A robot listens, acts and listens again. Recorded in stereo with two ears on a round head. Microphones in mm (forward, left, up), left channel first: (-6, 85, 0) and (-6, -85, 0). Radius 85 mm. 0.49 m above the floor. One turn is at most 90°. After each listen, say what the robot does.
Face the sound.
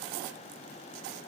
Keep listening.
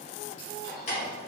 Turn 35° left.
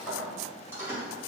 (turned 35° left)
Turn 15° right.
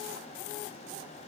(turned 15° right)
Keep listening.
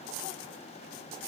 Keep listening.
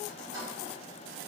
Turn 25° right.
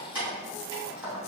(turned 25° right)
Turn 10° right.
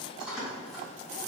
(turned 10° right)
Found it: keys jangling, straight ahead, 2 to 4 m away.